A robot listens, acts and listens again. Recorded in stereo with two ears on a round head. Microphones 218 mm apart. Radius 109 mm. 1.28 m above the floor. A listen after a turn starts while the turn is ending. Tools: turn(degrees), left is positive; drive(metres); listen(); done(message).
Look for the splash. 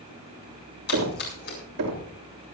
turn(degrees=45)
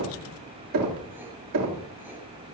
listen()
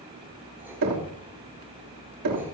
done("I heard a splash, but can't make it out now. It was about straight ahead or 90° left.")